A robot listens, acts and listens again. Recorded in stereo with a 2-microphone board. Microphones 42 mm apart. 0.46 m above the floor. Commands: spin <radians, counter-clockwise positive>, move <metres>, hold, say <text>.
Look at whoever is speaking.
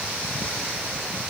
hold
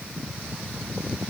hold
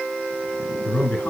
spin 0.70
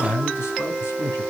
spin 1.75
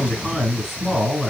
say Found it: a man speaking, straight ahead.